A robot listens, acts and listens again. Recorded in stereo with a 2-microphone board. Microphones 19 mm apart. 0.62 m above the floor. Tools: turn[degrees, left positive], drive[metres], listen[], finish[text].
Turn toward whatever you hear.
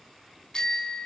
Thought: The bicycle bell: about 35° left or 145° left.
Action: turn[35]
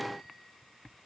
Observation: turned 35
Action: listen[]
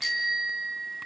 Action: finish[Found it: a bicycle bell, straight ahead.]